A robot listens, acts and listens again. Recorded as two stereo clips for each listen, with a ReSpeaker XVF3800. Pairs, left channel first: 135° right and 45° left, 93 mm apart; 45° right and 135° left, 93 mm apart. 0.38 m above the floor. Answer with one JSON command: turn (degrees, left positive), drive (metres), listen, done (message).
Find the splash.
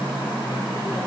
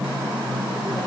{"listen": true}
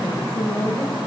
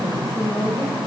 {"listen": true}
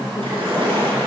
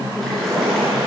{"turn": 40}
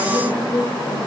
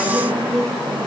{"done": "Facing where the splash came from. I can't hear it now."}